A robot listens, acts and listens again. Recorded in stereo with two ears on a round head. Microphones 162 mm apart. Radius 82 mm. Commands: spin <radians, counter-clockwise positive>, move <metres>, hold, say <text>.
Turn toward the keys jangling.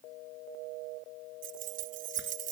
spin -0.79
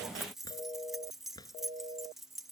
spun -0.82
say Facing the keys jangling.